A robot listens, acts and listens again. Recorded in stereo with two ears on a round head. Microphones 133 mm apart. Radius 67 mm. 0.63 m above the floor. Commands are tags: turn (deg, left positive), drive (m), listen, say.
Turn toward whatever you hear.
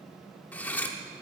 <turn deg="30"/>
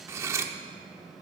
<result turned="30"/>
<turn deg="-20"/>
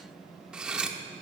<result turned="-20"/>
<say>Facing the cutlery clinking, under 1 m away.</say>